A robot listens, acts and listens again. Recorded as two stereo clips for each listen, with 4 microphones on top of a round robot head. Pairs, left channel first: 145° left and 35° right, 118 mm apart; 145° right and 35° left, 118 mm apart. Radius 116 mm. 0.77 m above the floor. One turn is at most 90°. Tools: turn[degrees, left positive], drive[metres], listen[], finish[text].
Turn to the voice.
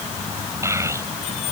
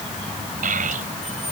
Thought: The child speaking: 30° left.
Action: turn[30]
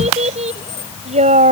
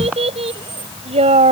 Action: finish[Found it: a child speaking, straight ahead.]